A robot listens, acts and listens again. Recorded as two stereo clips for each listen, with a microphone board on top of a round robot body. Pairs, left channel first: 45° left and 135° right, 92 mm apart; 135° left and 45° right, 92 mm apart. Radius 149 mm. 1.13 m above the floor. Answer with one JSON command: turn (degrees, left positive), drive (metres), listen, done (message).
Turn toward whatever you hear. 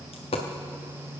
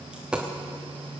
{"turn": 35}
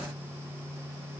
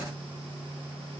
{"done": "Facing where the dropped coin came from. I can't hear it now."}